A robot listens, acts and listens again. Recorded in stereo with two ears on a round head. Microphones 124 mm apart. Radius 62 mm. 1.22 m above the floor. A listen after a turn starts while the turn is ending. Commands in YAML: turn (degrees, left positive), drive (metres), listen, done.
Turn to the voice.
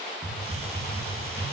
listen: true
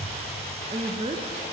turn: -40
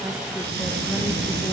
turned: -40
listen: true
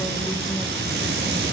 listen: true
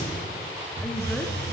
done: "I heard a woman speaking, but can't make it out now. It was about straight ahead or 100° right."